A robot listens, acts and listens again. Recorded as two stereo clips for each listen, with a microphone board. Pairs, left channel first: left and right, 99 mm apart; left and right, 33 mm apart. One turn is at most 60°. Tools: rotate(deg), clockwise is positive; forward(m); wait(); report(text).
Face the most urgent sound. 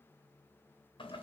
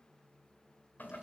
wait()
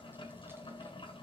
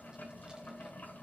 wait()
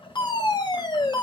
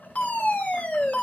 rotate(-45)
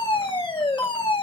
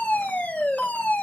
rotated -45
rotate(-60)
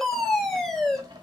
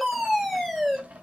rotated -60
report("Found it: a fire alarm, straight ahead.")